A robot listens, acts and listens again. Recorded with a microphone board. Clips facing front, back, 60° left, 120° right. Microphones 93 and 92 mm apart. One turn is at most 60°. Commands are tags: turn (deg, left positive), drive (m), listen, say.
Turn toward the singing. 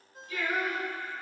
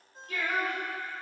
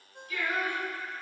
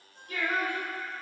<turn deg="-60"/>
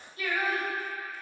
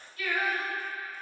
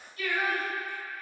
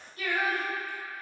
<turn deg="-60"/>
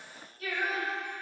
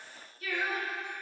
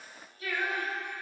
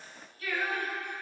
<say>Found it: singing, straight ahead, 2 to 4 m away.</say>